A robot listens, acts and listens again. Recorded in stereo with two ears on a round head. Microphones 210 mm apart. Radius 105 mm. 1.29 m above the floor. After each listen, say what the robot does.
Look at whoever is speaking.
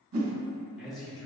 Turn 30° left.
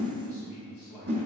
Turn 145° left.
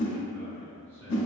Turn 10° right.
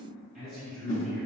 Facing the man speaking, over 4 m away.